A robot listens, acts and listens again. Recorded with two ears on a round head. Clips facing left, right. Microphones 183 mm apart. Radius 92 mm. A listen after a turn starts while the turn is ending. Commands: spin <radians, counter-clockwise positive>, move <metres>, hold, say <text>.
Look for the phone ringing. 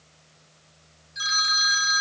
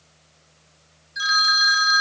spin -0.52
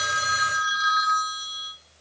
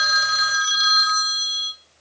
spin -2.36
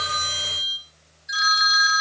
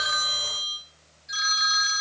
spin 0.26
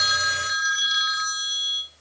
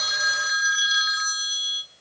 say Found it: a phone ringing, straight ahead.